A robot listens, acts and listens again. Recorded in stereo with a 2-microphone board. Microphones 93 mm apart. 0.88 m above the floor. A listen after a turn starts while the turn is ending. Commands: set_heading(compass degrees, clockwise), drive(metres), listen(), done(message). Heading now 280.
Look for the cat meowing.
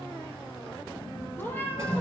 set_heading(260)
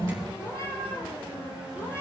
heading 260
set_heading(230)
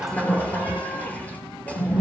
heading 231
listen()
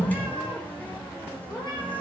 set_heading(101)
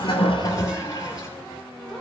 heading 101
listen()
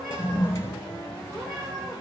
listen()
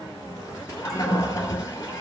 done("Facing where the cat meowing came from. I can't hear it now.")